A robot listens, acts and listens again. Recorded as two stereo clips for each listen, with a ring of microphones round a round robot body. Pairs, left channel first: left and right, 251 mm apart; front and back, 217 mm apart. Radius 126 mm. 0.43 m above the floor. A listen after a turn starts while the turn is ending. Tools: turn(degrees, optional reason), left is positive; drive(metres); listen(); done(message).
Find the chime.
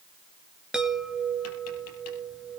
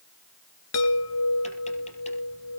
done("Facing the chime, 2 to 4 m away.")